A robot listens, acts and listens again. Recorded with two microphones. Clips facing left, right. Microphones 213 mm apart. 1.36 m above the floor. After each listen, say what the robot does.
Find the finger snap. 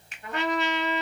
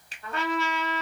Turn 35° right.
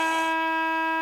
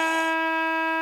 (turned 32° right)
Keep listening.
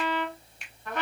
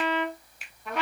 Found it: a finger snap, straight ahead, 1 to 2 m away.